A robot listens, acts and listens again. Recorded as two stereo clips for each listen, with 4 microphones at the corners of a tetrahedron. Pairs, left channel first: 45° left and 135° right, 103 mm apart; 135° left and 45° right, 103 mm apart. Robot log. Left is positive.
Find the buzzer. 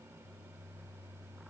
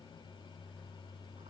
cmd idle
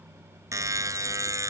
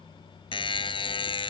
note: The buzzer: 165° left.
cmd yaw +165
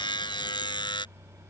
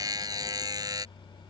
end: Found it: a buzzer, straight ahead.